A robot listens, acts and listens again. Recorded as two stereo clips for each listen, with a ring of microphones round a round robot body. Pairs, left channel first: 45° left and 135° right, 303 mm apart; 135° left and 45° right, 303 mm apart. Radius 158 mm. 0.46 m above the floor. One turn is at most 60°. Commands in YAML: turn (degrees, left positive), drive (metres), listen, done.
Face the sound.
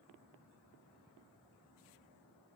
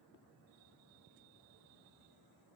listen: true
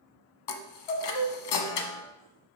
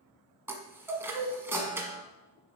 turn: 40
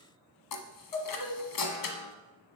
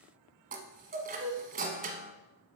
turn: 20
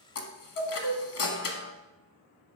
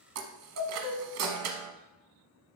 done: "Found it: a chime, straight ahead, 1 to 2 m away."